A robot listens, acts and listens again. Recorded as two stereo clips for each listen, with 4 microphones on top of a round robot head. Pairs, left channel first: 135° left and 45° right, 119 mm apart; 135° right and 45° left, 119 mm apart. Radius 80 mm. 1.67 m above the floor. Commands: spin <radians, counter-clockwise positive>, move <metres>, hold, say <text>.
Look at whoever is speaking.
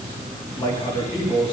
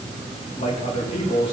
spin -3.05
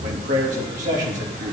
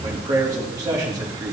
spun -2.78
spin -0.26
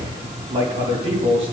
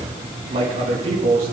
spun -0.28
say Found it: a man speaking, straight ahead, 2 to 4 m away.